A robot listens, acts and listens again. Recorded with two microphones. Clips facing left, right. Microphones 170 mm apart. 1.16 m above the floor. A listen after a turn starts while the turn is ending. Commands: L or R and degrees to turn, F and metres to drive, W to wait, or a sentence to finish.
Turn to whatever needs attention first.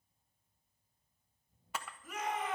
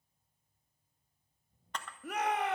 R65
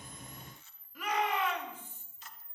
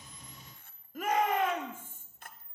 R45
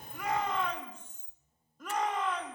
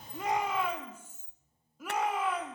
Facing the shout, 2 to 4 m away.